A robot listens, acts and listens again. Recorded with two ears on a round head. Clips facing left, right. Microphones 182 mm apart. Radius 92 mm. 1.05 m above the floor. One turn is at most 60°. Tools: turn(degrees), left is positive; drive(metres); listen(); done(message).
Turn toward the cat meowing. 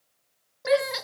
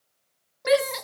turn(degrees=30)
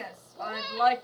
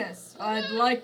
turn(degrees=-15)
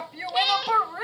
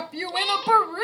turn(degrees=10)
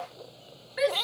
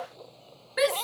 turn(degrees=15)
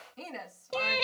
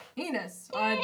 turn(degrees=20)
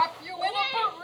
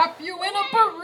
done("Facing the cat meowing.")